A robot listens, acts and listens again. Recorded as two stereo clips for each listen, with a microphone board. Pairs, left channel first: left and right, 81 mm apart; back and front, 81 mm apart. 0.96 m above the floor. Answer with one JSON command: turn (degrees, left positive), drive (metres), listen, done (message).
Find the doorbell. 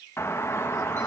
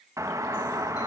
{"turn": 40}
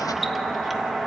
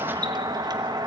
{"done": "Facing the doorbell."}